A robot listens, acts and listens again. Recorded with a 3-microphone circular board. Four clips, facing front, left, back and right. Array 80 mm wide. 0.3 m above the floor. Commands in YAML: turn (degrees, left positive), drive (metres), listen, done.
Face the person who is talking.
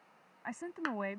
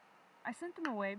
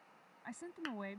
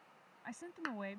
turn: 40
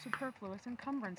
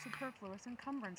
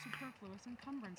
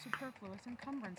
turn: 15
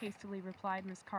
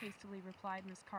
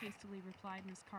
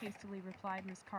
done: "Found it: a woman speaking, straight ahead."